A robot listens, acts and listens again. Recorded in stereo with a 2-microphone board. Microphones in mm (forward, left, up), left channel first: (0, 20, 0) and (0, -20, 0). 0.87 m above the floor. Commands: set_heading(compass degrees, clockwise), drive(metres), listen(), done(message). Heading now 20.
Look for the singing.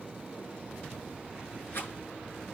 listen()
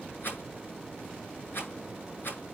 listen()
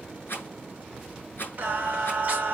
set_heading(50)
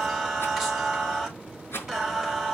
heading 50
done("Facing the singing.")